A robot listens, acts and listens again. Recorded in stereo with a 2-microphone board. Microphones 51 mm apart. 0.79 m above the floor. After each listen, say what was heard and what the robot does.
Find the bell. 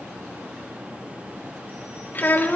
Keep listening.
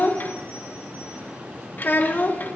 Keep listening.
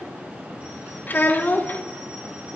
I can't make out a bell to turn to.